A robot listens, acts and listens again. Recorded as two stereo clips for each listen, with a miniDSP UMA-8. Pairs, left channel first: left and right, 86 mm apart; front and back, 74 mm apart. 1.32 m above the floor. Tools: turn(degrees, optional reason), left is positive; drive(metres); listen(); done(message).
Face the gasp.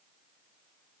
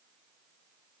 listen()
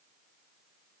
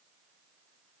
listen()
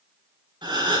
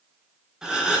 turn(degrees=-100, reason="The gasp: 100° right.")
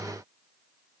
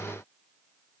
done("I heard a gasp from this way, but can't make it out now.")